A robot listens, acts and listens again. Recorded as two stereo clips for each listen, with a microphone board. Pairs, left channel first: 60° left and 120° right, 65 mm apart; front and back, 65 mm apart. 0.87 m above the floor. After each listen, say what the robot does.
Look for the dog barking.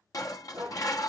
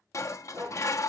Turn 170° right.
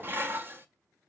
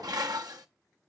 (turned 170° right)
Keep listening.
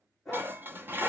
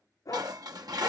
Turn 25° right.
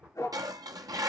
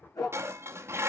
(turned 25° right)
Turn 20° left.
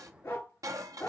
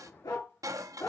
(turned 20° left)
Facing the dog barking, over 4 m away.